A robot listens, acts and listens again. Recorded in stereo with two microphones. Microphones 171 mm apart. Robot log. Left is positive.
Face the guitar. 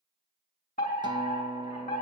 note: The guitar: about 25° right or 155° right.
cmd yaw -25
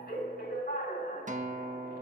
note: So it is at 125° right.
cmd yaw -125
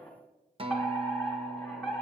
note: The guitar is now 35° right.
cmd yaw -35
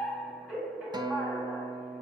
note: The guitar is now 30° right.
cmd yaw -30
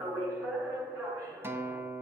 note: The guitar is now 15° right.
cmd yaw -15
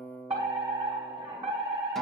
end: Found it: a guitar, straight ahead, 1 to 2 m away.